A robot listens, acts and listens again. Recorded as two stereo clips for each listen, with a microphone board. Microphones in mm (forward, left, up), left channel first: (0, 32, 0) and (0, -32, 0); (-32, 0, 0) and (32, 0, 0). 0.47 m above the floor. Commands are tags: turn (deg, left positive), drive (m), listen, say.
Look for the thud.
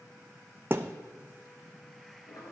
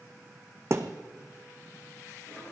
<turn deg="-40"/>
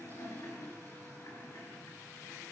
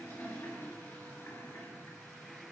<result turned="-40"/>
<say>Facing where the thud came from. I can't hear it now.</say>